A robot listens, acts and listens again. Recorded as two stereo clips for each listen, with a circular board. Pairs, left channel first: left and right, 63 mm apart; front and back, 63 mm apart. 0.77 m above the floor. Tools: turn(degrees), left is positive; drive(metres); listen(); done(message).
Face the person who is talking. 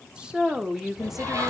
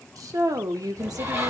turn(degrees=-175)
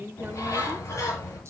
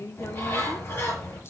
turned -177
turn(degrees=-30)
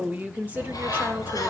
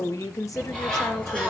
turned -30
turn(degrees=-25)
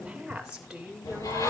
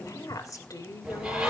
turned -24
turn(degrees=-15)
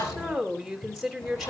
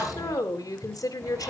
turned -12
done("Facing the woman speaking, 2 to 4 m away.")